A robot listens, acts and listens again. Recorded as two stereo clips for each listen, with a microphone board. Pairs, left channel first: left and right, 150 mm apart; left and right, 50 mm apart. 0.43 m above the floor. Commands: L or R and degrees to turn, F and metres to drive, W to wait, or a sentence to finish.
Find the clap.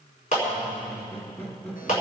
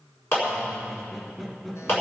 L55
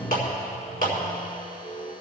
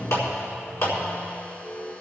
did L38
L85
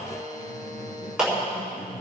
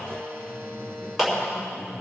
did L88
Found it: a clap, straight ahead.